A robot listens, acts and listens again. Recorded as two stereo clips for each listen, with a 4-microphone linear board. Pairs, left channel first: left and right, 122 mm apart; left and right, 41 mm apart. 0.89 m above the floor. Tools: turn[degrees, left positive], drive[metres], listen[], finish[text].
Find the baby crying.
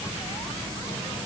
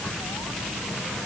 Action: listen[]
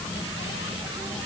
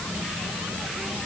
Action: listen[]
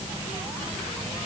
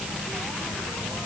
Action: finish[I can't make out a baby crying.]